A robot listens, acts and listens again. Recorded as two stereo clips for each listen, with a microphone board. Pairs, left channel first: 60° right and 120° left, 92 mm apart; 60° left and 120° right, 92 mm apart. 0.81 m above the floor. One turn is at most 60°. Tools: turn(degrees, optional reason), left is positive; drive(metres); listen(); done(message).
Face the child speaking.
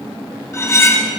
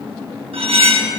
listen()
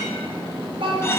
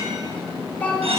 turn(degrees=60, reason="The child speaking: 135° left.")
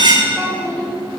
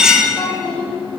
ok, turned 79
turn(degrees=60, reason="The child speaking is now 70° left.")
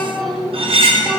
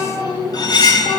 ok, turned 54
turn(degrees=30, reason="The child speaking is now 30° left.")
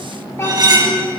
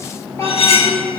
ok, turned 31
done("Facing the child speaking, 2 to 4 m away.")